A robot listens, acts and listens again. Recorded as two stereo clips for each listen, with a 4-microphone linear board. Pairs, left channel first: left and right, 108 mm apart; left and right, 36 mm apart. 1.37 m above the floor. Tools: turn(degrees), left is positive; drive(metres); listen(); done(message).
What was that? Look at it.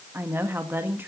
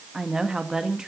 turn(degrees=-20)
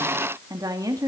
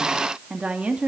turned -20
turn(degrees=-35)
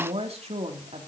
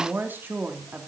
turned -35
turn(degrees=-110)
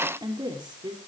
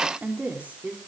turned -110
turn(degrees=-40)
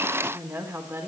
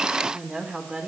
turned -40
turn(degrees=-20)
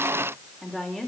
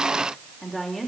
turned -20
done("Facing the woman speaking, over 4 m away.")